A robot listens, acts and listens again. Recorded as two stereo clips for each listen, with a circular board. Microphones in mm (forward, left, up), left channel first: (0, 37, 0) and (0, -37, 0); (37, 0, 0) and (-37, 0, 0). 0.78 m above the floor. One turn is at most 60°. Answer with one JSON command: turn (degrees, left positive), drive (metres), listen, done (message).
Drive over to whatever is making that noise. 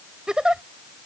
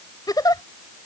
{"turn": -10}
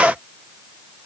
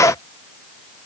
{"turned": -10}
{"listen": true}
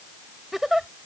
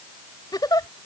{"drive": 1.0}
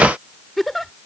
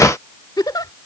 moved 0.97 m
{"drive": 1.0}
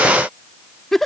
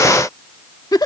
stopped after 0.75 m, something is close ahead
{"done": "Arrived at the giggle, straight ahead."}